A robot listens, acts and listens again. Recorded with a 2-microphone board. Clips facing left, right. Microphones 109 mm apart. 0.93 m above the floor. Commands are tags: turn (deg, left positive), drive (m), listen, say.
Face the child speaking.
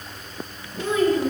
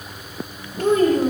<turn deg="-45"/>
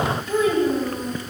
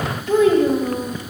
<turn deg="-85"/>
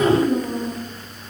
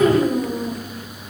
<turn deg="-50"/>
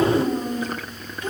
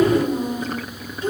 <turn deg="-30"/>
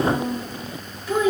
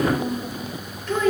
<turn deg="10"/>
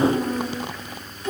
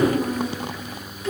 <say>Found it: a child speaking, straight ahead, 2 to 4 m away.</say>